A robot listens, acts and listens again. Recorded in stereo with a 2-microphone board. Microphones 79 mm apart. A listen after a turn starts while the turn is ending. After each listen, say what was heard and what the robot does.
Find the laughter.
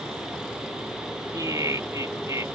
The laughter: about 40° right or 140° right. Turn 40° right.
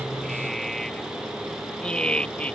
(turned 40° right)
So it is at 15° left. Turn 15° left.
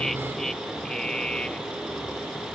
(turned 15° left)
The laughter is now 15° left. Turn 15° left.
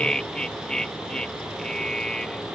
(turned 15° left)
The laughter is now 10° left. Turn 10° left.
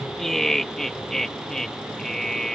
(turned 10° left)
Found it: laughter, straight ahead.